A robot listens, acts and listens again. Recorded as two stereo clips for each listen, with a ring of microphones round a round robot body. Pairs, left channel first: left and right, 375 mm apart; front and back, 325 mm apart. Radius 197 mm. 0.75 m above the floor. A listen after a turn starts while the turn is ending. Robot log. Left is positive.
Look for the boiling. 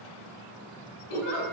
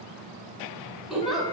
cmd idle
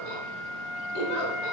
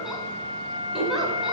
cmd idle
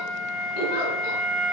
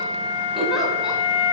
end: I can't make out boiling to turn to.